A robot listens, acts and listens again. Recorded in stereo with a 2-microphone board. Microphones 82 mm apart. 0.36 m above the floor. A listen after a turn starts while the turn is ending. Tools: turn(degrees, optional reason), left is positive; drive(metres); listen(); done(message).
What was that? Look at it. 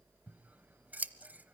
turn(degrees=-20, reason="The scissors: about 20° right or 160° right.")
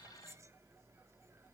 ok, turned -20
listen()
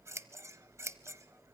turn(degrees=-145, reason="So it is at 145° right.")
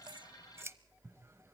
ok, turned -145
turn(degrees=-40, reason="The scissors is now 40° right.")
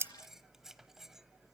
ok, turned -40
listen()
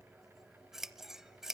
done("Facing the scissors.")